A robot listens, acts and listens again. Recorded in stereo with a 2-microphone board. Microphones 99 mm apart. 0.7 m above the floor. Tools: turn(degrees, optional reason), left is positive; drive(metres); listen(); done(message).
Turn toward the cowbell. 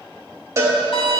turn(degrees=-30, reason="The cowbell: about 30° right or 150° right.")
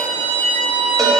listen()
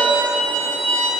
listen()
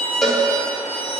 done("Found it: a cowbell, straight ahead.")